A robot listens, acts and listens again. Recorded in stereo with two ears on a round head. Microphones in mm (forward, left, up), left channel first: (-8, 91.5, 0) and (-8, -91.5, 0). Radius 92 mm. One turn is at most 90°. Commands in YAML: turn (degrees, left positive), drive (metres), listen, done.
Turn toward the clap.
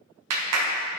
turn: -90
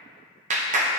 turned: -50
turn: -35
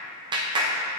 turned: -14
turn: -20
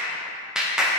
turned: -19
done: "Found it: a clap, straight ahead, under 1 m away."